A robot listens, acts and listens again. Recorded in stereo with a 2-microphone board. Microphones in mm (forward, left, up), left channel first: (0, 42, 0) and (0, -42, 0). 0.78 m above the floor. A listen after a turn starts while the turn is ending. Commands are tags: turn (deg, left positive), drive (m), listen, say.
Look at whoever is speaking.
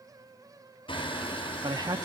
<turn deg="-50"/>
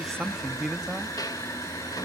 <say>Found it: a man speaking, straight ahead, under 1 m away.</say>